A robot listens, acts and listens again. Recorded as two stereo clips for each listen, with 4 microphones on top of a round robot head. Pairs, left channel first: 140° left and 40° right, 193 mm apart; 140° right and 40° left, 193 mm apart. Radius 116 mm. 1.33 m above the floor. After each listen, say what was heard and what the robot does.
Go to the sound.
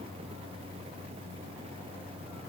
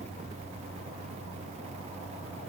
Keep listening.
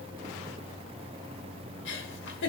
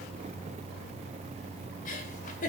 The giggle: 170° left. Turn 170° left.
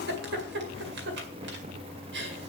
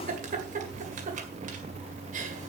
The giggle is now 10° right. Turn 10° right.
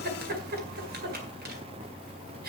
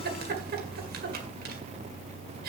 Drive 1.0 m forward.
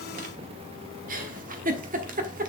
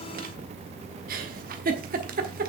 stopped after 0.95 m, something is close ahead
Arrived at the giggle, straight ahead.